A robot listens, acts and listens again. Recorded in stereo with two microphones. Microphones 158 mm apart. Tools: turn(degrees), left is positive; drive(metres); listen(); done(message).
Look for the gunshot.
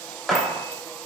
turn(degrees=30)
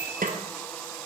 listen()
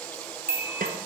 done("I heard a gunshot, but can't make it out now. It was about 30° right or 150° left.")